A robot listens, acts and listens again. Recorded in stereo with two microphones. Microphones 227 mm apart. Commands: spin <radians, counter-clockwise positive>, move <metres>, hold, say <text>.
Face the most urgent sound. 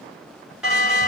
spin -0.52
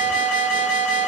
spin -2.62
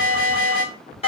spin 0.52
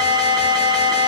say Found it: an alarm, straight ahead, 2 to 4 m away.